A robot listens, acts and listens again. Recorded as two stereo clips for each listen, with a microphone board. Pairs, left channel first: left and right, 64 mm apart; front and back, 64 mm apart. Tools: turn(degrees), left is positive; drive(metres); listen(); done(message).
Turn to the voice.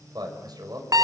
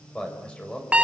turn(degrees=-75)
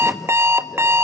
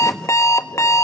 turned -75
listen()
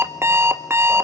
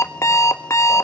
listen()
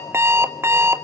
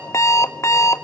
done("Facing where the man speaking came from. I can't hear it now.")